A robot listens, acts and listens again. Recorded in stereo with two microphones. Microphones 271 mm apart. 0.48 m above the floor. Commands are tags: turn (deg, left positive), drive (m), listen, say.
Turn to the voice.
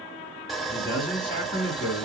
<turn deg="45"/>
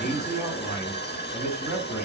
<say>Facing the man speaking, over 4 m away.</say>